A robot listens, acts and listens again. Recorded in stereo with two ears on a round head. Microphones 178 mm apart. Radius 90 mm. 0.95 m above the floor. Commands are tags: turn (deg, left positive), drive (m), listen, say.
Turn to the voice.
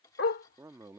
<turn deg="-15"/>
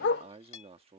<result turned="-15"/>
<turn deg="-150"/>
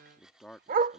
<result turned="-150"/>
<say>Found it: a man speaking, straight ahead.</say>